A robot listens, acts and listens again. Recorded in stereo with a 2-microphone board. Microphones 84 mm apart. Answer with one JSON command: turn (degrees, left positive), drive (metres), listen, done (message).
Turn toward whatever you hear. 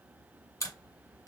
{"turn": 45}
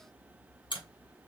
{"turn": 90}
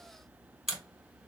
{"done": "Facing the camera shutter."}